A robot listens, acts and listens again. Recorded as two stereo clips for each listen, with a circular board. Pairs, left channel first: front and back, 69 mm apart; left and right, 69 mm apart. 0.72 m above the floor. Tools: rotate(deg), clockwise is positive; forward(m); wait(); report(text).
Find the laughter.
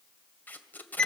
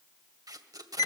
wait()
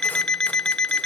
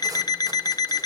wait()
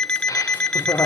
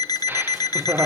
rotate(35)
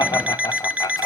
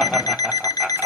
report("Found it: laughter, straight ahead, 1 to 2 m away.")